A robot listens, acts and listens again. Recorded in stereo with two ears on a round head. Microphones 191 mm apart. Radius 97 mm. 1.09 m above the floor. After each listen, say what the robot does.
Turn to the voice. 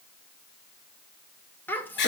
Turn 30° left.
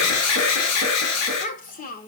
Turn 140° left.
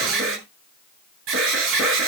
Keep listening.
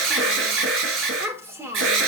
Turn 10° right.
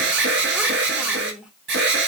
Found it: a child speaking, straight ahead, 2 to 4 m away.